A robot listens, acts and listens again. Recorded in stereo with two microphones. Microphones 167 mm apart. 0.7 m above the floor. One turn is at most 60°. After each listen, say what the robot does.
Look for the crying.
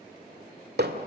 Keep listening.
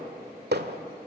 Keep listening.
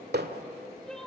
Turn 30° left.
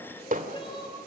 Turn 60° left.
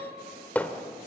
Turn 60° left.
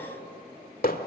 Turn 25° left.
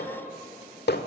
Keep listening.
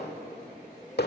I heard crying from this way, but can't make it out now.